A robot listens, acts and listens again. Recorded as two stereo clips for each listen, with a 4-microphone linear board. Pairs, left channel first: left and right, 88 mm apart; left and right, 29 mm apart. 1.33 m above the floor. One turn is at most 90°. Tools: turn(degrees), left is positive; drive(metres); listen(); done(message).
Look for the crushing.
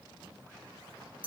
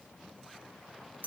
listen()
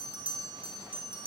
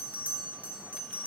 listen()
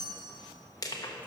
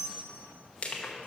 turn(degrees=40)
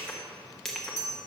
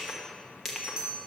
listen()
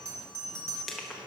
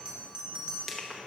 done("Facing the crushing.")